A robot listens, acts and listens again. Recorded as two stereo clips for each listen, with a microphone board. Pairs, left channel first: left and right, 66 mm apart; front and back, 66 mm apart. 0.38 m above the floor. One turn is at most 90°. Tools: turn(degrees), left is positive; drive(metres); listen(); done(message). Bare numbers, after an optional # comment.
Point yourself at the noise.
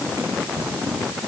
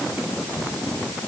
listen()
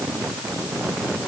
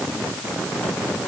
listen()
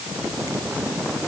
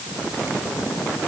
done("I can't make out anything to turn to.")